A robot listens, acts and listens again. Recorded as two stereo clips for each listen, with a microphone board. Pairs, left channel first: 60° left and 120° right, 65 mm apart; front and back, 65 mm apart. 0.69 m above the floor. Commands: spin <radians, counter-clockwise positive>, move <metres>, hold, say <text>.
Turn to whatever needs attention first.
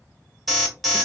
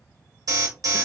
spin 2.62
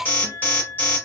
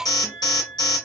say Found it: an alarm, straight ahead.